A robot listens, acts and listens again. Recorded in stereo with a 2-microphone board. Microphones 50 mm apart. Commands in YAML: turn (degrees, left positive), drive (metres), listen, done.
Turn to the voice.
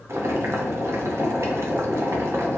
listen: true
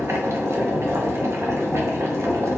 listen: true
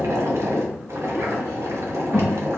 turn: -60
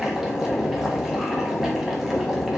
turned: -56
listen: true
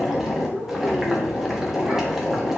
done: "Facing the child speaking, 2 to 4 m away."